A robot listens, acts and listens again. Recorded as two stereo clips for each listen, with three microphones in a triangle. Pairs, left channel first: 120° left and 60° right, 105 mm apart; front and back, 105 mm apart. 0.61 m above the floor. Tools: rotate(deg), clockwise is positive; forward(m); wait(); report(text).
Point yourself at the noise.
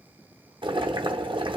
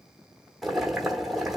rotate(90)
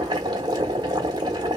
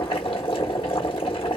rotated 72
rotate(20)
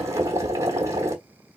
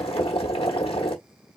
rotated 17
report("Facing the boiling.")